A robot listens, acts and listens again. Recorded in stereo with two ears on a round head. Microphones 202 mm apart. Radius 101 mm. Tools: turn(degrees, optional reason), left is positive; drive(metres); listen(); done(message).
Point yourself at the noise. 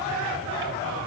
listen()
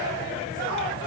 listen()
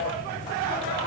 done("I can't make out anything to turn to.")